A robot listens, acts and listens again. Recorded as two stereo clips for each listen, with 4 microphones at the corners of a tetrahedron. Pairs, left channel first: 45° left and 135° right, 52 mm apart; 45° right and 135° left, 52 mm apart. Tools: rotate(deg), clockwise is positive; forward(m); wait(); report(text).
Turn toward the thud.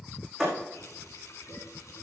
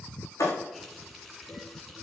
rotate(40)
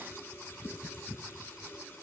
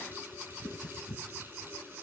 report("I heard a thud from this way, but can't make it out now.")